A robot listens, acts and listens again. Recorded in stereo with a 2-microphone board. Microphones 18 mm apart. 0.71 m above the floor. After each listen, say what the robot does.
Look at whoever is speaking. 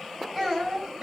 Turn 30° left.
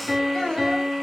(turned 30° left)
Turn 140° left.
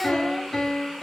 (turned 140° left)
Keep listening.
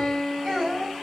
Turn 25° right.
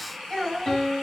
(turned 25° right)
Turn 10° right.
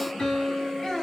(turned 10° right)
Facing the child speaking.